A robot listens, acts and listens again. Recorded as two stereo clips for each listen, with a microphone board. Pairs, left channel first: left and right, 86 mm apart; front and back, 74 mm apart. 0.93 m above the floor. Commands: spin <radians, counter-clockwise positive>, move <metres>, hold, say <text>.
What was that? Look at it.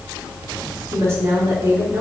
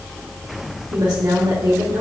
spin -2.62
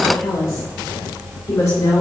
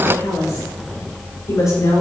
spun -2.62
spin 0.61
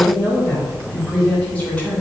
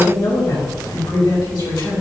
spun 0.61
spin 0.26
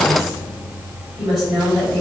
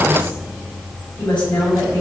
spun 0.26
say Found it: a woman speaking, straight ahead.